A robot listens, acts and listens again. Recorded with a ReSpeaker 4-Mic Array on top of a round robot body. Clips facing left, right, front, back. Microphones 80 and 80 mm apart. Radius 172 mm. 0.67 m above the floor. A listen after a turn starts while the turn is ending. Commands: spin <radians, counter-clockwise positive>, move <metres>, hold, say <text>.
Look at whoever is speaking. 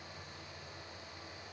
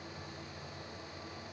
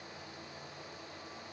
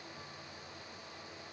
hold
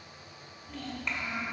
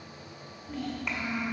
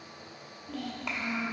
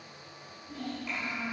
say Facing the child speaking.